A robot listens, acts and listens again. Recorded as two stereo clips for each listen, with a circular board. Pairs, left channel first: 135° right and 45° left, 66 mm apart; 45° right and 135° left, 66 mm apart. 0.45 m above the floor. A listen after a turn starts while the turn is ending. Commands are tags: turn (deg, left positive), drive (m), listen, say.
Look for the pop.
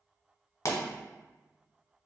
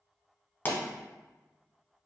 <turn deg="-105"/>
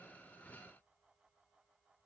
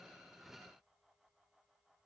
<say>I heard a pop from this way, but can't make it out now.</say>